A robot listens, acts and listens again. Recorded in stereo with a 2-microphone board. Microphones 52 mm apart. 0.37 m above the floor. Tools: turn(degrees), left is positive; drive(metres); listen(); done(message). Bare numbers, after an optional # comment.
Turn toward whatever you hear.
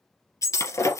turn(90)
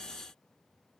done("Facing where the breaking glass came from. I can't hear it now.")